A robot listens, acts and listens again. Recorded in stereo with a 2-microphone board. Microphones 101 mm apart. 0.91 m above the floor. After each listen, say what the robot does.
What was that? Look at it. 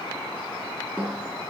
Turn 20° right.
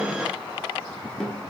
Facing the snare drum, over 4 m away.